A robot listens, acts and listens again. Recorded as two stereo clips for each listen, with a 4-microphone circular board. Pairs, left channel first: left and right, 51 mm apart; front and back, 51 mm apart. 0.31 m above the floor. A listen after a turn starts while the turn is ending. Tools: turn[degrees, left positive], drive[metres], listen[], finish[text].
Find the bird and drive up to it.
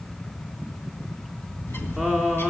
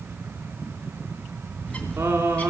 Thought: The bird: 60° left.
Action: turn[60]
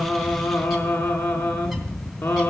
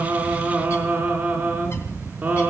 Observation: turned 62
Action: drive[1.0]
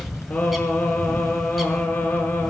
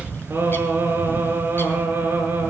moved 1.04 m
Action: drive[1.0]
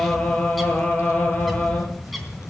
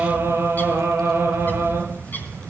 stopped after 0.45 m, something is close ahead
Action: finish[Arrived at the bird, straight ahead.]